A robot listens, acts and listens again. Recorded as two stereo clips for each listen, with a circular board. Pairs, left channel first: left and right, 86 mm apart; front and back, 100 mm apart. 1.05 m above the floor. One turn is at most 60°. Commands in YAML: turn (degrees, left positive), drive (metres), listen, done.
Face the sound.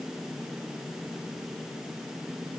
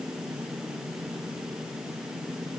listen: true
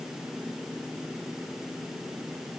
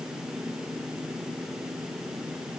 listen: true
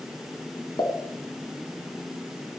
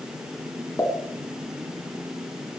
turn: 55
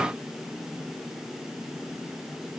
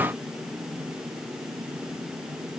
done: "Facing where the pop came from. I can't hear it now."